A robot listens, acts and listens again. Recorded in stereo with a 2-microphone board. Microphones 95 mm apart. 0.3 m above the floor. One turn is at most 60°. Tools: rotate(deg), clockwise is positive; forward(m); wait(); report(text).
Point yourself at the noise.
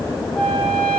rotate(-30)
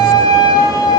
rotate(-60)
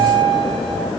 rotate(-60)
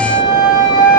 rotate(-45)
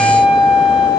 rotate(10)
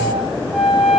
report("Facing the flute.")